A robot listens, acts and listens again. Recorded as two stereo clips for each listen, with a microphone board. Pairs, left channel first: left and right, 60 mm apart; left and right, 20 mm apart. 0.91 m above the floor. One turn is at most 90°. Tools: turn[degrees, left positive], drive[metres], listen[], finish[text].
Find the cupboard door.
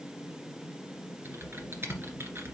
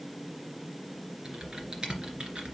Action: listen[]
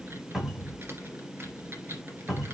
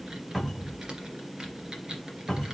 Action: turn[-30]
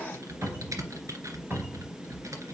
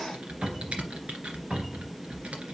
Thought: So it is at 145° right.
Action: turn[-90]
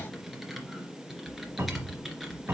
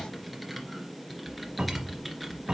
Thought: The cupboard door is now 40° right.
Action: turn[-40]
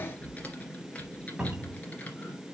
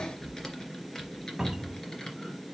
Thought: The cupboard door is now 15° right.
Action: turn[-15]
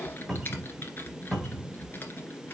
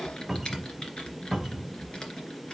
Action: finish[Found it: a cupboard door, straight ahead, 2 to 4 m away.]